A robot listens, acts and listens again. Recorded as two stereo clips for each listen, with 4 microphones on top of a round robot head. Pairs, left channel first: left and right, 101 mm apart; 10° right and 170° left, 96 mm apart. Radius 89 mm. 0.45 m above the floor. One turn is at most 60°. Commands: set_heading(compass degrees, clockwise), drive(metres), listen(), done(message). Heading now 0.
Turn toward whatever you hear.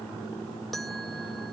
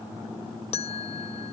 done("Facing the bell.")